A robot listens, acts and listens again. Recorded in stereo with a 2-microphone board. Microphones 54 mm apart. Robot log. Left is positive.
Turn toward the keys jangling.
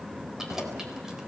cmd yaw -30
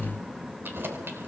note: So it is at 140° right.
cmd yaw -140
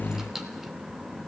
cmd idle
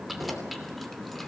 end: Facing the keys jangling, 2 to 4 m away.